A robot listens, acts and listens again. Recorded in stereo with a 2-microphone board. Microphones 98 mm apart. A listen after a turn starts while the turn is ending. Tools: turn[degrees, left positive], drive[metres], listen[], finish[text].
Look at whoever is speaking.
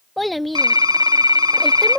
Action: turn[30]
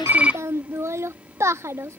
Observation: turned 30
Thought: So it is at 30° right.
Action: turn[-30]
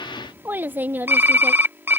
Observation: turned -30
Thought: The child speaking is now 20° right.
Action: turn[-20]
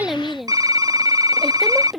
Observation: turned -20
Action: finish[Facing the child speaking.]